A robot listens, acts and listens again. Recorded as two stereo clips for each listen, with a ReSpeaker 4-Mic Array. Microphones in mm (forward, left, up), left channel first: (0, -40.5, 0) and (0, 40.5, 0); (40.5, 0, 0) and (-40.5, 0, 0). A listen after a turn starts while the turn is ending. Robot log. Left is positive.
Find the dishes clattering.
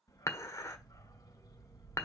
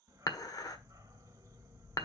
note: The dishes clattering: 40° right.
cmd yaw -40
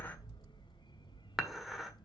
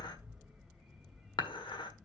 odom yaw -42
cmd idle
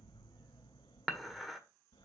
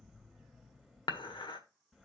end: Facing the dishes clattering, 1 to 2 m away.